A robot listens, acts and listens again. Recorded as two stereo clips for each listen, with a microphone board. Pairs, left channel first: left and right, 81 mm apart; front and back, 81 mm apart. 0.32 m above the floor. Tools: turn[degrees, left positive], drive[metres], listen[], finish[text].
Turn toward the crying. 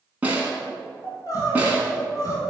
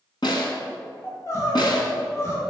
Thought: The crying: 50° left.
Action: turn[50]
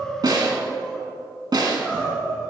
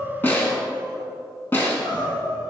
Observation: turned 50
Thought: The crying is now 10° left.
Action: turn[10]
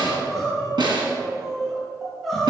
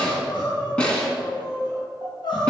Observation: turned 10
Action: finish[Facing the crying.]